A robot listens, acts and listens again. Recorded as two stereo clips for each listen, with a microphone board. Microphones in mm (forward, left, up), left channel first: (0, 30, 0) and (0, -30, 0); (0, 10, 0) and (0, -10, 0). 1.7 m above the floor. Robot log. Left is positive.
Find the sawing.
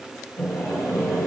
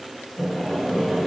note: The sawing: about 55° left or 125° left.
cmd yaw +55
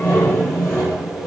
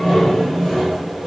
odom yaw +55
note: So it is at 50° left.
cmd yaw +50
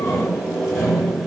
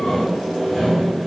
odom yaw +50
end: Facing the sawing.